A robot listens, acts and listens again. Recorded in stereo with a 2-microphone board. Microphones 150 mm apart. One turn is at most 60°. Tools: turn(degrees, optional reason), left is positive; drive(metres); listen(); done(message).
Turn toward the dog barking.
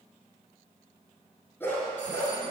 turn(degrees=15, reason="The dog barking: about 15° left or 165° left.")
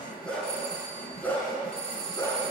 turn(degrees=15, reason="The dog barking: about 15° left or 165° left.")
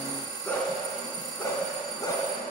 turn(degrees=20, reason="The dog barking: about 20° left or 160° left.")
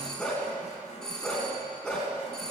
turn(degrees=30)
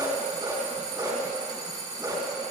turn(degrees=-25, reason="So it is at 25° right.")
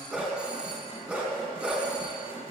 turn(degrees=-10, reason="The dog barking is now 10° right.")
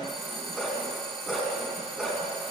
done("Found it: a dog barking, straight ahead, 2 to 4 m away.")